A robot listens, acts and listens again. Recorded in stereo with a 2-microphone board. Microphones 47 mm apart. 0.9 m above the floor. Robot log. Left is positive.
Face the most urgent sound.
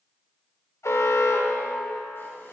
cmd yaw +90
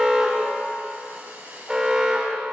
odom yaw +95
note: So it is at 10° right.
cmd yaw -10
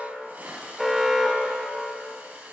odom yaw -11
end: Found it: an alarm, straight ahead.